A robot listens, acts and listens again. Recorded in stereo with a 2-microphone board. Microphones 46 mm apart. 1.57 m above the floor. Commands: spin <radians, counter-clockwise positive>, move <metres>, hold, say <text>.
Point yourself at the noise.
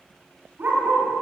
spin -0.79
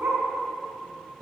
spin -1.92
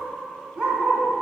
spin -0.52
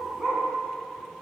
spin -0.26
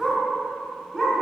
spin -0.17
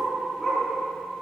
say Found it: a dog barking, straight ahead, over 4 m away.